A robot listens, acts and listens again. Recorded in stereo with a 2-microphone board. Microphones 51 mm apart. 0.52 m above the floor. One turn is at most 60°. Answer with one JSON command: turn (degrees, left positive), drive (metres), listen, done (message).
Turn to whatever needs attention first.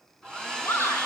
{"turn": 60}
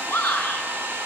{"turn": 50}
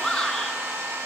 {"done": "Facing the shout, over 4 m away."}